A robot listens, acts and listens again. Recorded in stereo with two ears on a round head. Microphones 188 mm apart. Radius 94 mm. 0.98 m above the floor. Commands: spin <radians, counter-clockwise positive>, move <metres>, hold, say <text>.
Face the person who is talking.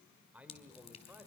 spin -0.52
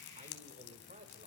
spin -2.53
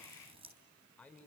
say Found it: a man speaking, straight ahead.